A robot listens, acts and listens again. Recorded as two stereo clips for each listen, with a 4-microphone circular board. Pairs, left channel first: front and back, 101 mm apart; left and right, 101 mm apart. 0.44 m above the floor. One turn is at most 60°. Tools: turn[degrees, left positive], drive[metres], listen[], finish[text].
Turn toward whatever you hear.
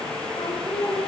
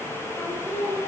Thought: The singing: 20° left.
Action: turn[20]
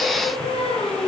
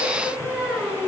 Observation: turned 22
Action: finish[Facing the singing.]